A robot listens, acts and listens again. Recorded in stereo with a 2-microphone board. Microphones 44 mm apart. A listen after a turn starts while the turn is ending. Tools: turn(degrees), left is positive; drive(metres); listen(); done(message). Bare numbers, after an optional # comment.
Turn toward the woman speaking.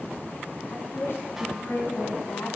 # The woman speaking: about 65° left or 115° left.
turn(65)
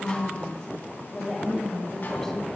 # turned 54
# So it is at 10° left.
turn(10)
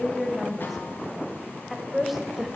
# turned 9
done("Found it: a woman speaking, straight ahead, 1 to 2 m away.")